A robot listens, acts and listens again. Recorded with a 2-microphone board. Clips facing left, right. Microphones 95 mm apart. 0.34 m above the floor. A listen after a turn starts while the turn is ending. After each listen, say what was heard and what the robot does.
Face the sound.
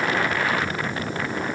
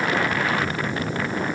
Keep listening.
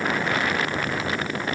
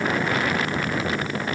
Keep listening.
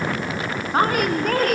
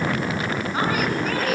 The woman speaking: about 50° left or 130° left. Turn 50° left.
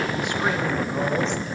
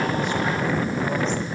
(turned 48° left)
Keep listening.
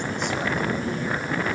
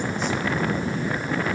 Keep listening.
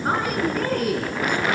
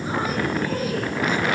So it is at 70° left. Turn 70° left.
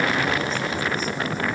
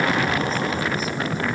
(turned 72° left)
Keep listening.
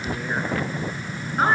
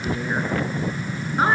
Found it: a woman speaking, straight ahead, over 4 m away.